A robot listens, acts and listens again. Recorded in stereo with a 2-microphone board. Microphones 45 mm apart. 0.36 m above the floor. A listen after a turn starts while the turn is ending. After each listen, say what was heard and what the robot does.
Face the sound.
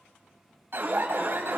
The alarm: about 55° right or 125° right. Turn 55° right.
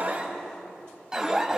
So it is at 20° right. Turn 20° right.
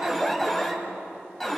Facing the alarm, 2 to 4 m away.